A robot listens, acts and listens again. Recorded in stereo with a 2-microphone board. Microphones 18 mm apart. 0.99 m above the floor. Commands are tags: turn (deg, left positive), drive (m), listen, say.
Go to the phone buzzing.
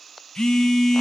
<turn deg="50"/>
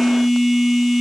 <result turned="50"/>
<drive m="1.0"/>
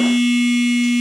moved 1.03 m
<drive m="1.0"/>
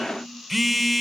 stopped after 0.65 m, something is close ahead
<say>I am next to the phone buzzing.</say>